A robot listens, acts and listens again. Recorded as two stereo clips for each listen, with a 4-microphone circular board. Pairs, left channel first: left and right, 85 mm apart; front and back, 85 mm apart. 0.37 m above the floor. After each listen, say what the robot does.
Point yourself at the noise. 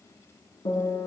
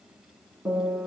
Turn 95° left.
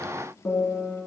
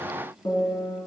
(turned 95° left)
Found it: a piano, straight ahead.